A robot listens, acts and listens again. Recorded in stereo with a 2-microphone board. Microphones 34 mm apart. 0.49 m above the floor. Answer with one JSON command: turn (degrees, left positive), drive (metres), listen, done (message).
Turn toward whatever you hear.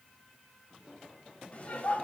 {"turn": 50}
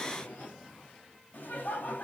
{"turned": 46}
{"turn": 60}
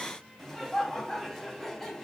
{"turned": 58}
{"done": "Found it: laughter, straight ahead, over 4 m away."}